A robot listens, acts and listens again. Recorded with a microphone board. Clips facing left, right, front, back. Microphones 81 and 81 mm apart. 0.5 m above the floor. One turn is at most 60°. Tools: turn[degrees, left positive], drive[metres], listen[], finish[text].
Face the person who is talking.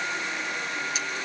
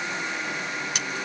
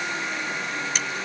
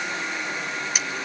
Action: listen[]
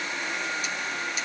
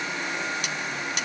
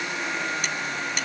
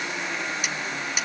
Action: listen[]
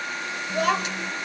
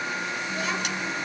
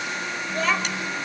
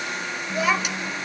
Thought: The child speaking: 100° left.
Action: turn[60]
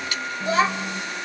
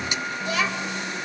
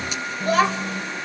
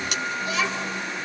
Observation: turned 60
Thought: The child speaking is now 35° left.
Action: turn[35]
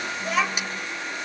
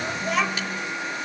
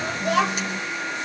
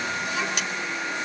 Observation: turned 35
Action: finish[Facing the child speaking.]